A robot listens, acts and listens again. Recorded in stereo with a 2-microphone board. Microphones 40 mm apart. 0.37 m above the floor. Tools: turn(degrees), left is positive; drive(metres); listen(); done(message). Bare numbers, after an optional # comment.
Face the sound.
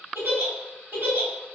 # The giggle: about 60° right or 120° right.
turn(-60)
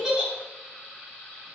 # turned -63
# So it is at 15° right.
turn(-15)
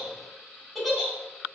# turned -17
done("Facing the giggle.")